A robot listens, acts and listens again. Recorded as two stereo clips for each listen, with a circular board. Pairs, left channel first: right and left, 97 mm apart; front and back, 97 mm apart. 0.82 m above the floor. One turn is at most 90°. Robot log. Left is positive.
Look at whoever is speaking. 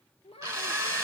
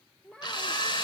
note: The child speaking: 80° right.
cmd yaw -80
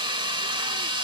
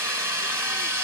cmd idle
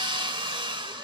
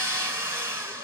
cmd idle
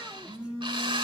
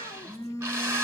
end: I heard a child speaking from this way, but can't make it out now.